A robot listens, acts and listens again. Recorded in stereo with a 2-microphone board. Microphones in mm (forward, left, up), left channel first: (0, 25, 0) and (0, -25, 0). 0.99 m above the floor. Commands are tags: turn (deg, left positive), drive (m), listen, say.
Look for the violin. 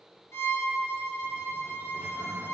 <turn deg="65"/>
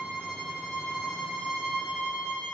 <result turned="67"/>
<turn deg="10"/>
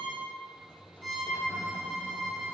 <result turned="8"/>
<say>Found it: a violin, straight ahead.</say>